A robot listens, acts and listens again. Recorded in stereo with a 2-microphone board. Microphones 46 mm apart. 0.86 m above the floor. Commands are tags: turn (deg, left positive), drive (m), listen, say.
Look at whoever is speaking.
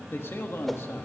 <turn deg="60"/>
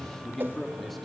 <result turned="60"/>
<say>Found it: a man speaking, straight ahead, 2 to 4 m away.</say>